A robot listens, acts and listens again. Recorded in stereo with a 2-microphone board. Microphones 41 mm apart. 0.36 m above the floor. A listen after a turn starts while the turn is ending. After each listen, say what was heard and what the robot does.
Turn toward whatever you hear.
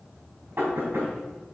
The knocking: about 60° right or 120° right. Turn 60° right.
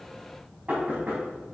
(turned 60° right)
So it is at 45° right. Turn 45° right.
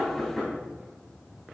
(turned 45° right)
The knocking is now 15° right. Turn 15° right.
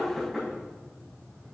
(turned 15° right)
Found it: knocking, straight ahead, 2 to 4 m away.